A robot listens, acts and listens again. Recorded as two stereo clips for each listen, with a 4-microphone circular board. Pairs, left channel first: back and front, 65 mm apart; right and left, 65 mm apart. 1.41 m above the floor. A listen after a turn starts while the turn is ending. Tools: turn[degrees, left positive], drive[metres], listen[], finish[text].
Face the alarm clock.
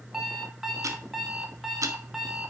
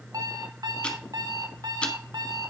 Thought: The alarm clock: 85° left.
Action: turn[85]
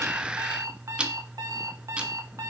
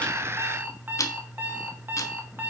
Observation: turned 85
Thought: The alarm clock is now 30° left.
Action: turn[30]
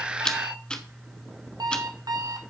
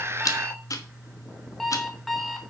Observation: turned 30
Action: finish[Facing the alarm clock.]